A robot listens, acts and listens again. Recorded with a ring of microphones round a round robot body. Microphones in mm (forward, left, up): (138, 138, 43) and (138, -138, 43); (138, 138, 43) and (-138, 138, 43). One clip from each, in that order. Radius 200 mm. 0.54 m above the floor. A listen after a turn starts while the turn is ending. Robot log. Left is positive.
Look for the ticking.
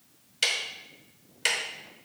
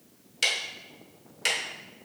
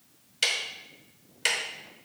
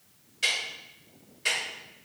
note: The ticking: 10° left.
cmd yaw +10
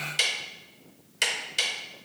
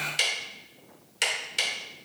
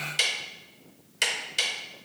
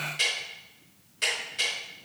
end: Facing the ticking.